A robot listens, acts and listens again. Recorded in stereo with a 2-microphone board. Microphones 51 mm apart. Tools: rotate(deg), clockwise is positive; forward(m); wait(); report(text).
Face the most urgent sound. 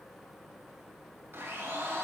wait()
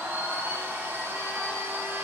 wait()
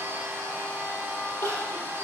rotate(-45)
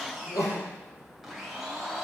rotate(-90)
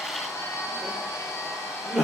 report("Found it: crying, straight ahead.")